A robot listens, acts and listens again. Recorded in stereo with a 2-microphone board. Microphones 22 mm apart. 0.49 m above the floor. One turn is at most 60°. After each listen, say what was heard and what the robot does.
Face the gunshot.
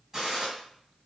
The gunshot: about 20° right or 160° right. Turn 20° right.
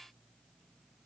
Keep listening.
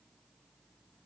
I heard a gunshot, but can't make it out now. It was about straight ahead or 140° right.